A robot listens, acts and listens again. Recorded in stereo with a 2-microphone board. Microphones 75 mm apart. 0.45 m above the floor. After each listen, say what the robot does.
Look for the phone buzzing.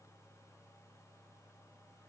Keep listening.
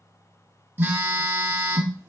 Turn 25° right.
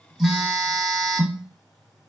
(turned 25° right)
Found it: a phone buzzing, straight ahead.